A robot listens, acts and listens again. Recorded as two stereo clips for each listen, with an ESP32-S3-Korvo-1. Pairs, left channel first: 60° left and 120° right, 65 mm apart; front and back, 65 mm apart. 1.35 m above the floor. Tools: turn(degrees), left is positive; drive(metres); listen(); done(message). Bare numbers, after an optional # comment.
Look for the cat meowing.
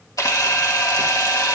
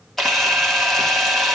listen()
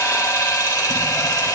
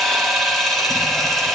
listen()
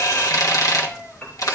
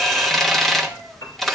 done("I can't make out a cat meowing to turn to.")